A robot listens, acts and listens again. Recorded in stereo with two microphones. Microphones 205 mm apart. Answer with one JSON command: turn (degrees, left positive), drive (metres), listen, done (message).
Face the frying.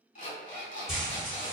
{"turn": 30}
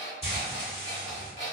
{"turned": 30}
{"turn": 150}
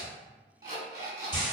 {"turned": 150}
{"turn": 20}
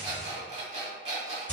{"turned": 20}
{"done": "Found it: frying, straight ahead."}